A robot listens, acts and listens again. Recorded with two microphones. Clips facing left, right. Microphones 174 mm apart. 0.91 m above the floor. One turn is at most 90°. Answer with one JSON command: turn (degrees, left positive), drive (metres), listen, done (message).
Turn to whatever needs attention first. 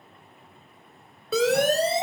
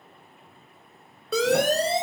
{"turn": 30}
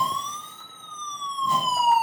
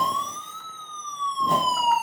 {"turn": 90}
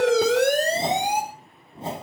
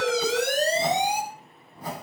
{"turn": 60}
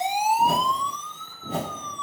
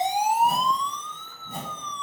{"turn": 10}
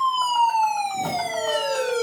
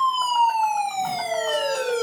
{"done": "Found it: a siren, straight ahead, over 4 m away."}